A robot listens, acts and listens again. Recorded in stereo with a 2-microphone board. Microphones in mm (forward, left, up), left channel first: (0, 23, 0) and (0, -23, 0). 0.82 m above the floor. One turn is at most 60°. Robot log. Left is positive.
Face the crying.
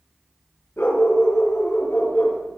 cmd idle
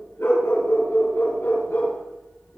cmd idle
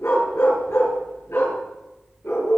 end: I can't make out crying to turn to.